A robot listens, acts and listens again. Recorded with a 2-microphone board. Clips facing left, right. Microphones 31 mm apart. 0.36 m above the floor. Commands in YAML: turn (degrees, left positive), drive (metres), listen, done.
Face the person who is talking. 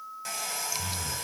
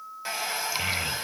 turn: -90
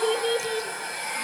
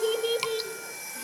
done: "Found it: a child speaking, straight ahead."